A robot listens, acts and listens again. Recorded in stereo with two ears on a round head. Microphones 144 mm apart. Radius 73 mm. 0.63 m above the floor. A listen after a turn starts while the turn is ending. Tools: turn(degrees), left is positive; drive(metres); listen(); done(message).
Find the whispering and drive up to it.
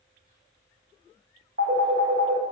listen()
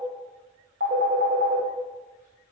listen()
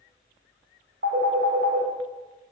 done("I can't make out whispering to turn to.")